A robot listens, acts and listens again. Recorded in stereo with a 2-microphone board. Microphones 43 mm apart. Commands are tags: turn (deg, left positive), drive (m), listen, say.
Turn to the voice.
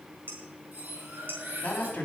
<turn deg="35"/>
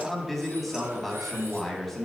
<say>Found it: a man speaking, straight ahead.</say>